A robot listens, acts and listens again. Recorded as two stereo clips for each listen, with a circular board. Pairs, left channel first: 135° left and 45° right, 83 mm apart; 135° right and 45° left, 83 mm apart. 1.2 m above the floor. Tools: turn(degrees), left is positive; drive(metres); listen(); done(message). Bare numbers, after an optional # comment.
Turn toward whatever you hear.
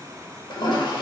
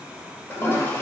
# The toilet flushing: 160° left.
turn(160)
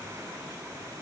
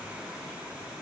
listen()
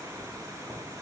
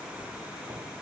listen()
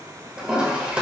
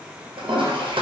# The toilet flushing is now 30° left.
turn(30)
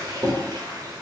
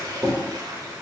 done("Facing the toilet flushing.")